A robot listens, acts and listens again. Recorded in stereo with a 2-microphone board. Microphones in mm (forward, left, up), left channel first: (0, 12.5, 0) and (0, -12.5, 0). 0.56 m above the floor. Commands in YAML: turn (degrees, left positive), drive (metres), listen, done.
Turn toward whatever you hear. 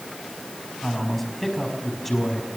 turn: 30
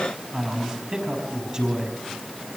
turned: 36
turn: -25
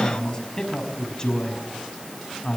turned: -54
turn: 25
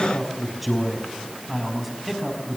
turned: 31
done: "Found it: a man speaking, straight ahead."